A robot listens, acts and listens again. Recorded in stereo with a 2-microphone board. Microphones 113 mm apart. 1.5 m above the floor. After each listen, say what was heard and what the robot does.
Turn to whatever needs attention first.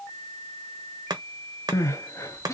The crying: about 25° left or 155° left. Turn 25° left.
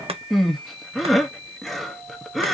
Found it: crying, straight ahead.